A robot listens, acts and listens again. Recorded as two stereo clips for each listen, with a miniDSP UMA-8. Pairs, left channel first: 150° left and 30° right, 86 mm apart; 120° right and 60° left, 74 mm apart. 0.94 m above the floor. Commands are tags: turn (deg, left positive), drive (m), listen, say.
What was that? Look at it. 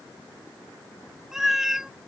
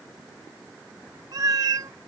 <turn deg="55"/>
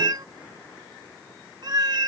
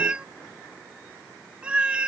<turn deg="-10"/>
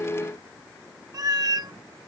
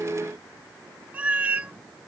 <say>Found it: a cat meowing, straight ahead.</say>